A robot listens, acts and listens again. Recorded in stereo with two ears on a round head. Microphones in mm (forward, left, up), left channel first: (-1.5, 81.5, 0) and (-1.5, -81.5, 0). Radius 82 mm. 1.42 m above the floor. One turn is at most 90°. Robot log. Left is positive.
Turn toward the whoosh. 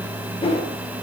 note: The whoosh: about 35° left or 145° left.
cmd yaw +35
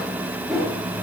end: Facing the whoosh, over 4 m away.